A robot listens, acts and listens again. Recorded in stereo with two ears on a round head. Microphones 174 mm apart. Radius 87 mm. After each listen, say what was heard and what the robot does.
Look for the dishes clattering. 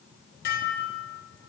The dishes clattering: about 50° left or 130° left. Turn 50° left.
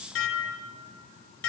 So it is at 75° left. Turn 75° left.
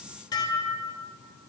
The dishes clattering is now 20° left. Turn 20° left.
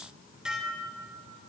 Facing the dishes clattering, 2 to 4 m away.